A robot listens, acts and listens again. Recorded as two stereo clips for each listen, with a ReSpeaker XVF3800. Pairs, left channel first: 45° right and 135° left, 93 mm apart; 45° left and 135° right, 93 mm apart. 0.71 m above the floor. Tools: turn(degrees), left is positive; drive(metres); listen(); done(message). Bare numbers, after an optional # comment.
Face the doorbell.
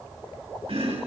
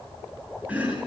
listen()
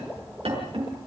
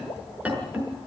listen()
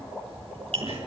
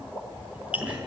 done("I can't make out a doorbell to turn to.")